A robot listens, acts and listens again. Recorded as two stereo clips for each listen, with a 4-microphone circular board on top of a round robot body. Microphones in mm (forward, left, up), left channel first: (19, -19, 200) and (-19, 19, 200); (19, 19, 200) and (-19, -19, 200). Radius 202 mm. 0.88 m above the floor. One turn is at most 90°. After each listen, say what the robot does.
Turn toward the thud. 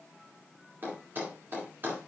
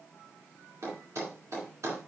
Turn 90° right.
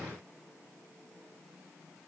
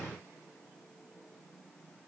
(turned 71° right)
Turn 90° right.
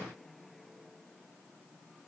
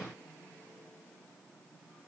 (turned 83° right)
Turn 15° right.
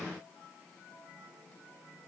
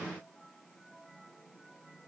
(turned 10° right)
Facing where the thud came from. I can't hear it now.